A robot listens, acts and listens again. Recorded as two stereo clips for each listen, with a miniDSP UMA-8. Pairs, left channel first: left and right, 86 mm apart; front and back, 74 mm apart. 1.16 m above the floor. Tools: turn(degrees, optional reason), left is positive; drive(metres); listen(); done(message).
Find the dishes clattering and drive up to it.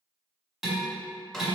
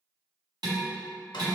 turn(degrees=-175, reason="The dishes clattering: 175° right.")
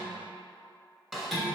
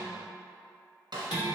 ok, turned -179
drive(metres=1.0)
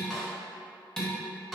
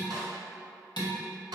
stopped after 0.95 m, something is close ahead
done("I am next to the dishes clattering.")